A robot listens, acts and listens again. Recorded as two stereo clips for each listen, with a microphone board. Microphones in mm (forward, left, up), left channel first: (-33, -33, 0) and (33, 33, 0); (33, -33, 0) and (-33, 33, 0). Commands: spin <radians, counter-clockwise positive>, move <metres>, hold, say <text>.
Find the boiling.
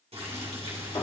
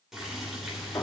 spin 0.87
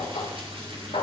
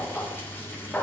spin 0.44
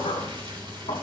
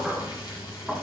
say Found it: boiling, straight ahead.